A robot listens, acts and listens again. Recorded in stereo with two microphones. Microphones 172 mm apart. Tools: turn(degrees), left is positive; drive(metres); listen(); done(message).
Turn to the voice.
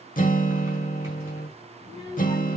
turn(degrees=20)
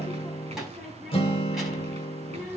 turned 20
done("Found it: a child speaking, straight ahead.")